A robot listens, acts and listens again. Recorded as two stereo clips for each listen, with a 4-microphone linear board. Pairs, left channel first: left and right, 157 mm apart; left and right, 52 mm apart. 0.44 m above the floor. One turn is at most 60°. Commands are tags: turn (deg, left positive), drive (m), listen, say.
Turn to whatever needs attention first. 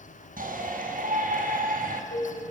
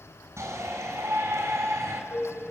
<turn deg="-60"/>
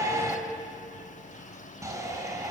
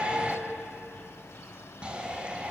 <turn deg="-25"/>
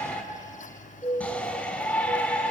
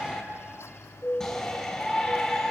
<turn deg="10"/>
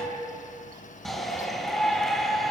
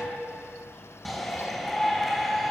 <say>Found it: a shout, straight ahead, 2 to 4 m away.</say>